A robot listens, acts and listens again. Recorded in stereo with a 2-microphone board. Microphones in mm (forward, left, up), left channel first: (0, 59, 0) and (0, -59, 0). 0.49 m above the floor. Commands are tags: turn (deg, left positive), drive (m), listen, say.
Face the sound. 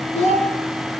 <turn deg="90"/>
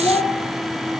<say>Found it: a child speaking, straight ahead.</say>